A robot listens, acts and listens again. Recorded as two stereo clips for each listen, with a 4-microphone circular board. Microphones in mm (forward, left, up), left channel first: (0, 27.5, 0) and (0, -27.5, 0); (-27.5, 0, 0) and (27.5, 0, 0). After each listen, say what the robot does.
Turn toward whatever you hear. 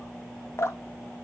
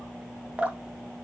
Turn 65° left.
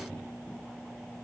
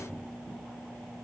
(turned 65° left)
Keep listening.
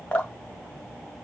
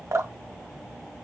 Turn 25° left.
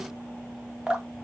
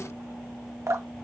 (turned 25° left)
Turn 20° right.
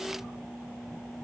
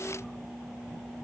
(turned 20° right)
Keep listening.
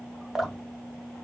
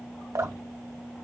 Found it: dripping, straight ahead, under 1 m away.